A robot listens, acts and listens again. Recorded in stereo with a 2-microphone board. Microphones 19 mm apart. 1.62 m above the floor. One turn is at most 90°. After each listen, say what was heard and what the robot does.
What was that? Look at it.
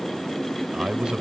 The man speaking: about 55° right or 125° right. Turn 55° right.
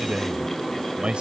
So it is at 65° right. Turn 65° right.
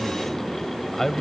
The man speaking is now 20° left. Turn 20° left.
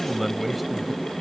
Found it: a man speaking, straight ahead.